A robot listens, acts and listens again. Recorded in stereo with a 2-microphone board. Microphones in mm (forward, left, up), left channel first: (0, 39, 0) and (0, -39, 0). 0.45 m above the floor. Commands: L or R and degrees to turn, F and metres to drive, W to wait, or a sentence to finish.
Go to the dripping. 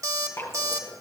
L35
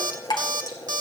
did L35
L110
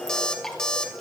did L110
F1.0
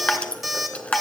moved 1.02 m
L15
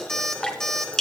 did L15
L10
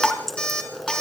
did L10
F1.0
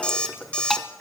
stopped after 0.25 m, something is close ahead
Arrived at the dripping, straight ahead.